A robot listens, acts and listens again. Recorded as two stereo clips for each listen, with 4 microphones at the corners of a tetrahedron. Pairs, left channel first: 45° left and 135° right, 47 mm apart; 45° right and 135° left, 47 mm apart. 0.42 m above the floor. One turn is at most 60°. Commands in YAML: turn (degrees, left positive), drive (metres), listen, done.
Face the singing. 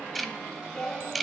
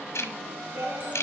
turn: 60
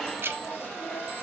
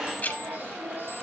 turn: 60
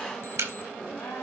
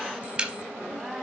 turn: 55
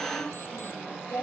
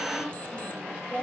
turn: 15
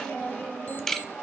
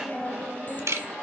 done: "Facing the singing."